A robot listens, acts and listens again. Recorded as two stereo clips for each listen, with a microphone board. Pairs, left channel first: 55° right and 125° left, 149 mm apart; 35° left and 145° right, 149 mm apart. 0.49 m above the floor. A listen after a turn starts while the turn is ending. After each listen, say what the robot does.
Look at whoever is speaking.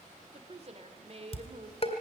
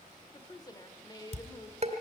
Turn 90° left.
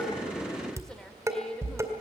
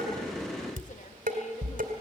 Keep listening.
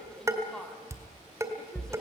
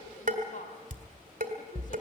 Turn 30° left.
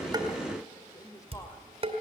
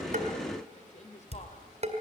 Turn 10° left.
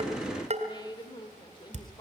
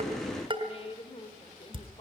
Facing the woman speaking, 1 to 2 m away.